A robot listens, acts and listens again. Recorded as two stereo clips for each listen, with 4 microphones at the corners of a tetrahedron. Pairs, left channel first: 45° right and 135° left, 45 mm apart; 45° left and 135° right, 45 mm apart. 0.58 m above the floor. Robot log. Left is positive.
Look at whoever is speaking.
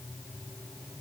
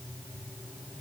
cmd idle
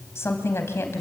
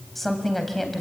note: The woman speaking: 40° right.
cmd yaw -40
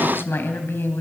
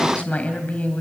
note: The woman speaking is now 15° right.
cmd yaw -15
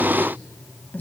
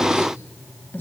end: Facing the woman speaking.